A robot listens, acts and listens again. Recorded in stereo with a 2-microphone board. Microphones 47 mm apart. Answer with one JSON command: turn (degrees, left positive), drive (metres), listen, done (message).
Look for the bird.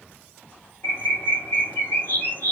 {"turn": 45}
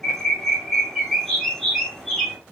{"done": "Found it: a bird, straight ahead."}